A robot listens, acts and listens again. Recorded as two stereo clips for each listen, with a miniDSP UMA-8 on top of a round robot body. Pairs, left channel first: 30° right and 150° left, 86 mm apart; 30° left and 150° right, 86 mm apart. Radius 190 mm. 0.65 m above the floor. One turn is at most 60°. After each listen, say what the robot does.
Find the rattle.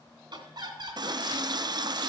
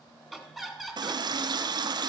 Keep listening.
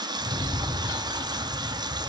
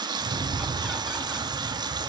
Turn 60° right.
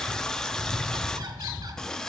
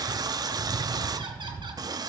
Turn 60° right.
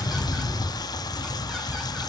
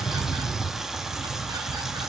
Turn 10° right.
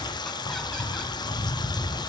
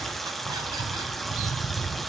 Facing the rattle, over 4 m away.